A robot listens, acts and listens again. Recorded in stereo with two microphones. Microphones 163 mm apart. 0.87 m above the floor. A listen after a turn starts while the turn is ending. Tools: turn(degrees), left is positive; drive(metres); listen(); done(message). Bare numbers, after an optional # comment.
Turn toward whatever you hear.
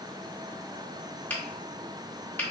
turn(30)
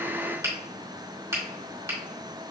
# So it is at 20° right.
turn(-20)
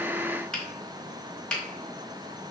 done("Found it: a finger snap, straight ahead, 1 to 2 m away.")